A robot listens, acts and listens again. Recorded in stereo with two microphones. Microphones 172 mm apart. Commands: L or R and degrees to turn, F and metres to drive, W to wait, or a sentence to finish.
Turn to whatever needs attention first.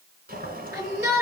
R15
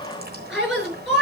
Found it: a shout, straight ahead.